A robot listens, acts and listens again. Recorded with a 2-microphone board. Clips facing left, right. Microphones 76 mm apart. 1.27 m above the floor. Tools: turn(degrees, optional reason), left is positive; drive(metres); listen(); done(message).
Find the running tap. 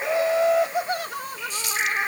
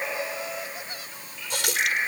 turn(degrees=-90)
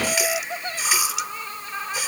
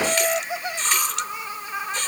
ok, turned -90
turn(degrees=10, reason="So it is at 10° left.")
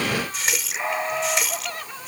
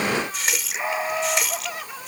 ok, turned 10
done("Found it: a running tap, straight ahead.")